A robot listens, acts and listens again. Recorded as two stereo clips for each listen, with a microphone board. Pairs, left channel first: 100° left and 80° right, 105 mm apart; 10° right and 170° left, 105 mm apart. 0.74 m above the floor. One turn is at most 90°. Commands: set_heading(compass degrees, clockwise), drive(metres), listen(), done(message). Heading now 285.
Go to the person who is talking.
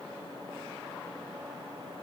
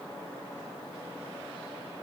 listen()
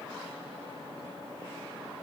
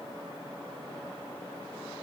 listen()
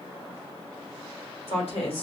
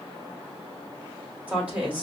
set_heading(195)
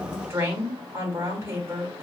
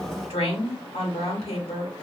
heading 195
set_heading(210)
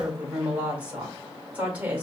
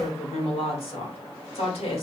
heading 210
drive(1.0)
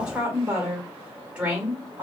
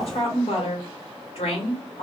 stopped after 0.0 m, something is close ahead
done("Something is in my way. I am facing the woman speaking but have not reached it.")